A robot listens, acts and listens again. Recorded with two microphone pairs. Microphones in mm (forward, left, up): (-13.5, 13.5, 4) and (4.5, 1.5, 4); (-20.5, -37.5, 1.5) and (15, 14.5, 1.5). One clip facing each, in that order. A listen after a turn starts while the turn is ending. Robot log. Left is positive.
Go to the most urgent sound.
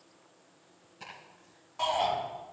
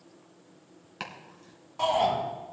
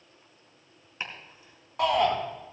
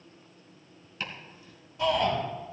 note: The shout: 125° right.
cmd yaw -125
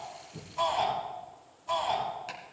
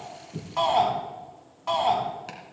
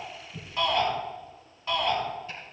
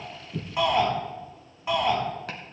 note: The shout is now 15° right.
cmd yaw -15
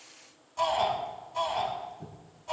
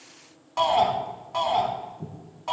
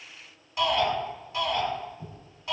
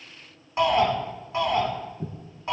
cmd fwd 1.0
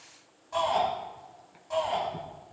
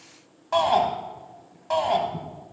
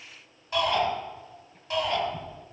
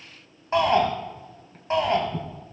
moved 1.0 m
cmd fwd 1.0
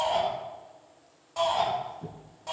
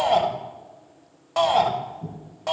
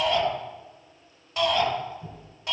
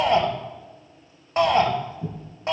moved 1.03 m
note: The shout is now 10° left.
cmd yaw +10
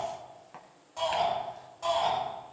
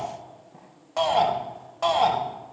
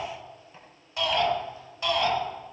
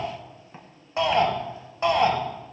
cmd fwd 1.0
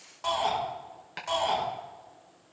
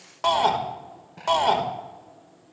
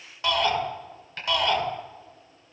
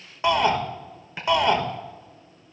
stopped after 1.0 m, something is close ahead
end: Arrived at the shout, straight ahead.